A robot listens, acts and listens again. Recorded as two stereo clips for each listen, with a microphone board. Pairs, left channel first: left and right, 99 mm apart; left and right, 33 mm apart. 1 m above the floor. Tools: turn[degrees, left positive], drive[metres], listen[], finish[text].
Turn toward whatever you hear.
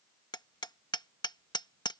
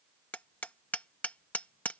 Thought: The hammering: about 45° left or 135° left.
Action: turn[45]
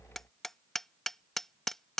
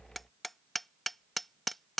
Action: finish[Found it: hammering, straight ahead.]